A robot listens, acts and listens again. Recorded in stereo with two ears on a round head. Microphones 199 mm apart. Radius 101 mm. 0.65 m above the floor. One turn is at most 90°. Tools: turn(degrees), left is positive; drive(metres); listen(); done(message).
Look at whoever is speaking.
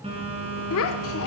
turn(degrees=70)
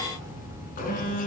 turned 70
listen()
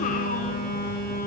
listen()
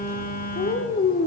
turn(degrees=40)
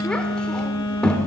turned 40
done("Facing the child speaking.")